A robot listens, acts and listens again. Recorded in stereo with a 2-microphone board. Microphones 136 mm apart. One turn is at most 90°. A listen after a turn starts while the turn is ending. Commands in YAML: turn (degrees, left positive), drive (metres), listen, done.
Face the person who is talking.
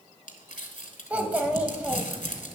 turn: -30
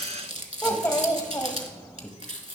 turn: 20
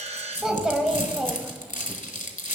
done: "Facing the child speaking."